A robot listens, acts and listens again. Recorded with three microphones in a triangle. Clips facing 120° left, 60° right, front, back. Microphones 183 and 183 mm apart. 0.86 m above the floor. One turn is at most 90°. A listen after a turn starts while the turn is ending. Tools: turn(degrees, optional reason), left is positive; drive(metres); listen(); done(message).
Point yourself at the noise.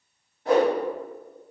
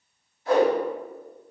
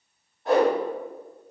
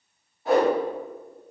turn(degrees=90, reason="The whoosh: 95° left.")
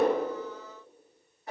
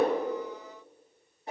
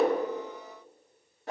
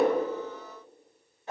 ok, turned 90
done("Found it: a whoosh, straight ahead, 2 to 4 m away.")